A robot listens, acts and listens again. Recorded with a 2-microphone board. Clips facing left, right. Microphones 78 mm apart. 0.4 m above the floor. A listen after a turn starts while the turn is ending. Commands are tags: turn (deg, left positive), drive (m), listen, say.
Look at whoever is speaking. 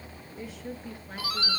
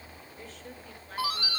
<turn deg="30"/>
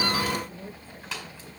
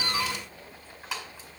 <turn deg="145"/>
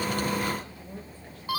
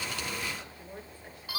<turn deg="-20"/>
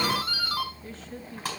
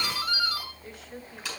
<say>Found it: a woman speaking, straight ahead, over 4 m away.</say>